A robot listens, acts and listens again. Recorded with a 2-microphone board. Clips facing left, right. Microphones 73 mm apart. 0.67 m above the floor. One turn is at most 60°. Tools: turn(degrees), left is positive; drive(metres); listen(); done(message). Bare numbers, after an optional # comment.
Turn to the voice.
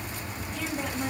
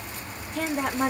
# The woman speaking: about 60° right or 120° right.
turn(-60)
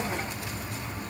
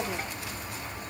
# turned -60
listen()
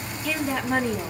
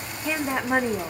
# So it is at 25° right.
turn(-25)
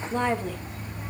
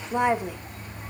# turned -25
# The woman speaking is now 20° right.
turn(-20)
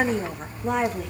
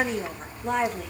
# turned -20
done("Found it: a woman speaking, straight ahead.")